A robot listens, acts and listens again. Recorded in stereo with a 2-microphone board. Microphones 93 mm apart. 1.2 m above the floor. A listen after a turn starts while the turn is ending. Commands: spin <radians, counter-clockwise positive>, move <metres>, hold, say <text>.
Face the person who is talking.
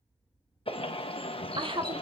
spin -1.13
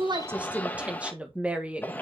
spin -0.26
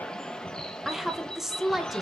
say Facing the woman speaking, 1 to 2 m away.